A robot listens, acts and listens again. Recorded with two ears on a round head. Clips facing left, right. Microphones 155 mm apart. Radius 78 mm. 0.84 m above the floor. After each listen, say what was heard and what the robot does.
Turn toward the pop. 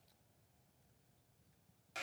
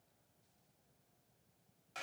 Keep listening.
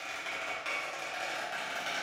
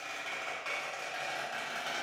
Keep listening.
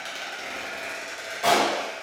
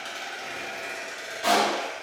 The pop: about 55° left or 125° left. Turn 55° left.
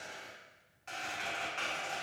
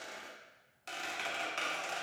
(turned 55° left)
Keep listening.
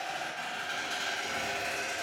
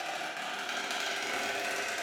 I heard a pop, but can't make it out now. It was about straight ahead or 70° left.